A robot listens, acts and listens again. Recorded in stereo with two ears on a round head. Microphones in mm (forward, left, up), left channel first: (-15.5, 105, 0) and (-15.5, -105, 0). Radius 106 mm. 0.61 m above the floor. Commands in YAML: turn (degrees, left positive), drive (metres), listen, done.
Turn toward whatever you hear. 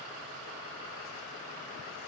listen: true
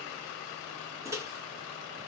turn: -30
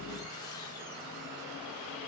listen: true
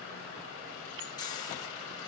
turn: 20
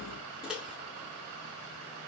done: "Found it: a microwave, straight ahead."